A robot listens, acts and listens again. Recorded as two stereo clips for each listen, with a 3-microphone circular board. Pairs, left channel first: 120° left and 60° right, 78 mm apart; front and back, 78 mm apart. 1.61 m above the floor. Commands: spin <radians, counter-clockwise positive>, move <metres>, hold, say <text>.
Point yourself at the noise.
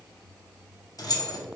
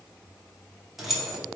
spin 1.66
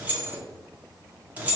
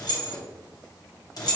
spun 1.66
say Found it: keys jangling, straight ahead.